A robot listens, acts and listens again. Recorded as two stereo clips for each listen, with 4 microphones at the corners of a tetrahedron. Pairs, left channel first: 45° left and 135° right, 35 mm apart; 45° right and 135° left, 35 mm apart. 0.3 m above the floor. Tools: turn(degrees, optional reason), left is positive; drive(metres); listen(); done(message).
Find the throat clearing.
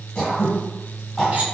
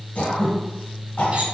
turn(degrees=-35, reason="The throat clearing: 35° right.")
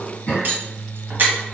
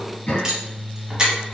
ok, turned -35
turn(degrees=-10, reason="The throat clearing is now 10° right.")
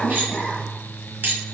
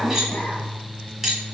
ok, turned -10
done("Found it: throat clearing, straight ahead, 1 to 2 m away.")